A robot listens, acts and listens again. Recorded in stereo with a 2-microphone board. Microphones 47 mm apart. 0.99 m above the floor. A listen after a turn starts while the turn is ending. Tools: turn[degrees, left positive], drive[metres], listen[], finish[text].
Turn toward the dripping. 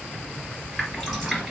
Action: turn[30]
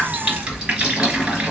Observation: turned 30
Thought: So it is at 25° right.
Action: turn[-25]
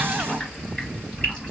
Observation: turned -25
Thought: The dripping is now 20° left.
Action: turn[20]
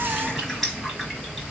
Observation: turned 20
Action: finish[Found it: dripping, straight ahead, 2 to 4 m away.]